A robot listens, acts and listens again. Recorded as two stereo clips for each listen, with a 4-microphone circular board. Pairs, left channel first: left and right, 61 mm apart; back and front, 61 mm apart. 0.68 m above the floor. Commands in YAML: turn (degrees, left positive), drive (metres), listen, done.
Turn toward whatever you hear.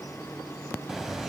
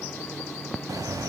done: "Facing the bird."